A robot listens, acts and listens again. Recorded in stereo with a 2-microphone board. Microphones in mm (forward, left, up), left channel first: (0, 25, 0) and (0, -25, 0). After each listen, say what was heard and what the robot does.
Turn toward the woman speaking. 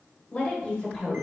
The woman speaking: about 20° left or 160° left. Turn 20° left.
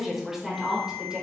So it is at 15° right. Turn 15° right.
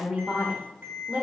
The woman speaking is now 30° right. Turn 30° right.
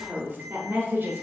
The woman speaking is now 45° right. Turn 45° right.
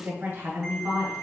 The woman speaking is now 40° right. Turn 40° right.
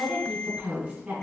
The woman speaking is now 15° right. Turn 15° right.
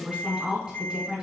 Facing the woman speaking.